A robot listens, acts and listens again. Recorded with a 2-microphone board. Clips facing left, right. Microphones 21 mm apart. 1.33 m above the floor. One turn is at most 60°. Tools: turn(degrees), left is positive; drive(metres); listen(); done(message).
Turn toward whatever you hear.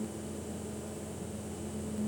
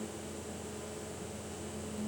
listen()
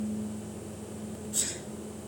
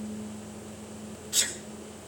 turn(degrees=-60)
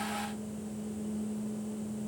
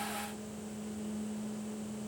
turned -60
turn(degrees=-30)
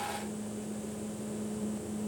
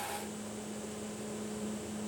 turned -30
done("Facing where the sneeze came from. I can't hear it now.")